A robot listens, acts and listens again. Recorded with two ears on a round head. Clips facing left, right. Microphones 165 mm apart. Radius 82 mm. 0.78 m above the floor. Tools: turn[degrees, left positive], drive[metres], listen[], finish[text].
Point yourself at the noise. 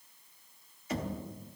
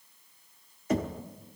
Thought: The knocking: about 40° right or 140° right.
Action: turn[-40]
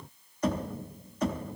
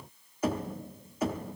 Action: finish[Facing the knocking.]